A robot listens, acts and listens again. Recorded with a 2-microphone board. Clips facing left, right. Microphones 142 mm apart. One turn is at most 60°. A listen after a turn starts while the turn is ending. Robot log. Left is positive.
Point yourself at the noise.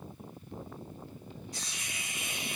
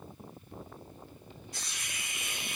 note: The hiss: about 35° left or 145° left.
cmd yaw +35
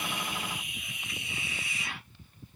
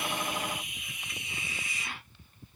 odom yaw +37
end: Found it: a hiss, straight ahead.